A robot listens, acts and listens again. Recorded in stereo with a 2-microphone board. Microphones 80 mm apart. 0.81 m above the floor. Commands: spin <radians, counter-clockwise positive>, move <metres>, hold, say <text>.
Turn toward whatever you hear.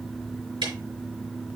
spin -1.57
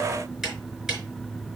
say Found it: ticking, straight ahead.